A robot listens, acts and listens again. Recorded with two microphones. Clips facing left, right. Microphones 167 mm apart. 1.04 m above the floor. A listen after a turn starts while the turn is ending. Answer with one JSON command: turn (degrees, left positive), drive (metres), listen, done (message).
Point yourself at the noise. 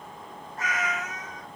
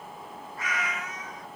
{"turn": 40}
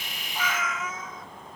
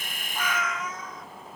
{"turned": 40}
{"done": "Facing the cat meowing, 1 to 2 m away."}